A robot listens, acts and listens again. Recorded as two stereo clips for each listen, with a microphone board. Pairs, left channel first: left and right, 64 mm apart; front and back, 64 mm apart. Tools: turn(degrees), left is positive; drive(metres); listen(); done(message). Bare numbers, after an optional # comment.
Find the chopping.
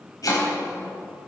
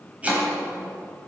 # The chopping: 110° left.
turn(110)
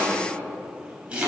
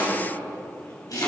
# The chopping is now 20° right.
turn(-20)
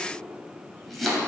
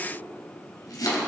done("Facing the chopping, 2 to 4 m away.")